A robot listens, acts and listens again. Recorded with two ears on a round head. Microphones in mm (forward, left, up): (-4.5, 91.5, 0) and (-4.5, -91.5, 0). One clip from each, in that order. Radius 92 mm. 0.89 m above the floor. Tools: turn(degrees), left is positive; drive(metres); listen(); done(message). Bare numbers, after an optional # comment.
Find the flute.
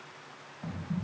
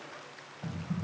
listen()
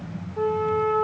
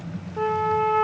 # The flute: about 40° right or 140° right.
turn(-40)
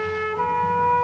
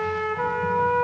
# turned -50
done("Facing the flute, under 1 m away.")